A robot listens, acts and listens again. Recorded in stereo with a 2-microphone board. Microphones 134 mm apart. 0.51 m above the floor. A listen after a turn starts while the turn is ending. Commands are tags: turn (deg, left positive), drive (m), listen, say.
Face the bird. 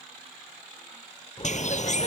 <turn deg="60"/>
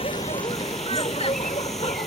<listen/>
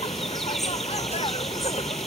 <listen/>
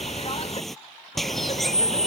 <say>Facing the bird.</say>